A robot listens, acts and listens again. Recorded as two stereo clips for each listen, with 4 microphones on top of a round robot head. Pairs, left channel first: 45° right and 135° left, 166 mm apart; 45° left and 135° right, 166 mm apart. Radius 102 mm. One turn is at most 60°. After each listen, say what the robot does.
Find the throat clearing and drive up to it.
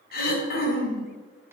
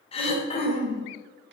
Turn 15° right.
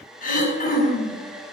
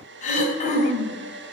Drive 1.0 m forward.
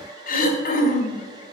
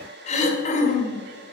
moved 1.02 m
Drive 1.0 m forward.
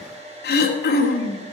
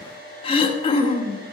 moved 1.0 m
Turn 15° right.
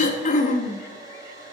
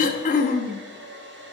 Drive 1.0 m forward.
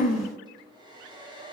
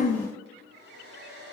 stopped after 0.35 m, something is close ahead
Arrived at the throat clearing, straight ahead.